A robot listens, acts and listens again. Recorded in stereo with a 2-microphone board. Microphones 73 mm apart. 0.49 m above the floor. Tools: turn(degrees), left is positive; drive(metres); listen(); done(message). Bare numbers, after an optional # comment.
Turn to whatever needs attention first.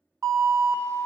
# The alarm: about 45° right or 135° right.
turn(-45)
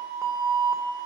# So it is at 75° right.
turn(-75)
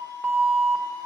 # The alarm is now 35° right.
turn(-35)
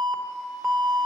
# The alarm is now 10° left.
turn(10)
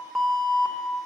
done("Facing the alarm, under 1 m away.")